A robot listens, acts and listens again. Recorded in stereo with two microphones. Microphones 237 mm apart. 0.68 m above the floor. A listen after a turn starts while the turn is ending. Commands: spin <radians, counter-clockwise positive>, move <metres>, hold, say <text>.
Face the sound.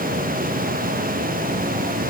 hold
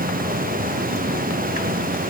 hold
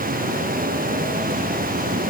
say I can't make out anything to turn to.